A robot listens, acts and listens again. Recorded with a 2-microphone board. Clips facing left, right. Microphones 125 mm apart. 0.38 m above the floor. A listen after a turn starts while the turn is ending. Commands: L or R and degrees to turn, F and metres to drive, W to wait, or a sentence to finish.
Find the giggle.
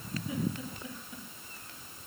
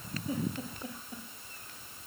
R40
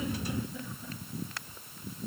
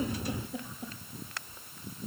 R100
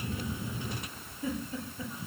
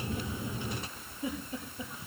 R20
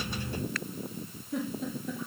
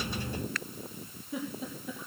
Found it: a giggle, straight ahead, over 4 m away.